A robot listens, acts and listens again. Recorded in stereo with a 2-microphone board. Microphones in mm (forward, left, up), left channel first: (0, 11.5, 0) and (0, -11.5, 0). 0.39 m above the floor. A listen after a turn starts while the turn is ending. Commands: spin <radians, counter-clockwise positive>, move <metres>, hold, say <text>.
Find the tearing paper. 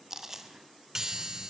hold
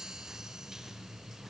hold
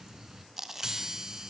say I can't make out tearing paper, only a chime and chewing.